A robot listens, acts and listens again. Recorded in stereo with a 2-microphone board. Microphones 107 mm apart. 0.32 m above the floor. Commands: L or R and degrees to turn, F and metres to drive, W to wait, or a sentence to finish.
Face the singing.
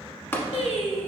L90
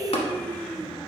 L15
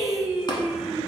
Found it: singing, straight ahead.